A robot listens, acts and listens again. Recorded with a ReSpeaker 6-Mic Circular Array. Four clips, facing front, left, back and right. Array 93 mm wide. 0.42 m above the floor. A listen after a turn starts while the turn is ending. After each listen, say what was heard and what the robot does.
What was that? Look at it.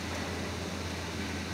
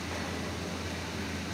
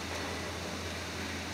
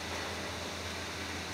Keep listening.
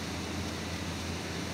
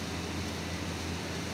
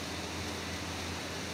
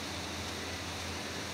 Keep listening.
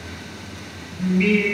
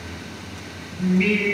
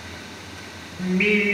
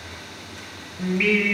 The singing: 125° right. Turn 125° right.
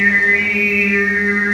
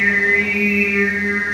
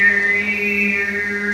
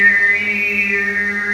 The singing is now 15° right. Turn 15° right.
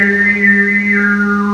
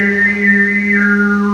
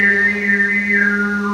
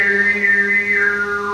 The singing is now 15° left. Turn 15° left.
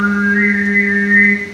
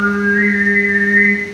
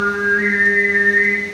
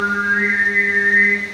Facing the singing.